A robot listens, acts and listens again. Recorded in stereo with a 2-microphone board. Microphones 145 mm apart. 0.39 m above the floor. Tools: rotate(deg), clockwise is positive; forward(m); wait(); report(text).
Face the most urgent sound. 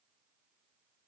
wait()
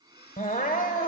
rotate(-70)
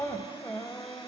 rotate(-15)
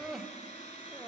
report("Found it: crying, straight ahead, 1 to 2 m away.")